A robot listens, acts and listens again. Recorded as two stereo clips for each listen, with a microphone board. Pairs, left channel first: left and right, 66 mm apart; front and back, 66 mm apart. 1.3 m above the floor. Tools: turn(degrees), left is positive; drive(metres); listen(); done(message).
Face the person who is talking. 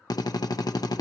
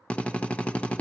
listen()
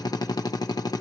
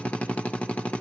listen()
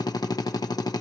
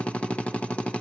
done("I can't make out anyone speaking, only a drill.")